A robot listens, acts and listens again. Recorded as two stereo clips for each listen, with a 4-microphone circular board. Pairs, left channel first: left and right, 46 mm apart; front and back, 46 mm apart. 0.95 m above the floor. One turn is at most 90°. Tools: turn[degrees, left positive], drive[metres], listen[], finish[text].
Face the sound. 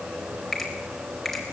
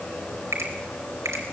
Thought: The finger snap: straight behind.
Action: turn[90]
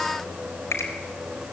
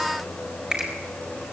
Thought: The finger snap is now 110° left.
Action: turn[90]
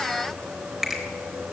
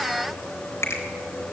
Action: finish[Facing the finger snap, over 4 m away.]